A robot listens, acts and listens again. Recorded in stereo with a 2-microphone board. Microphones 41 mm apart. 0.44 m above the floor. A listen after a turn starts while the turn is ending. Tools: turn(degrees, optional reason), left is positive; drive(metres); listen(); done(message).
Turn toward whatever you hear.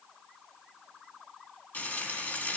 turn(degrees=45, reason="The frying: about 45° left or 135° left.")
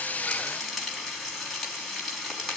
done("Found it: frying, straight ahead.")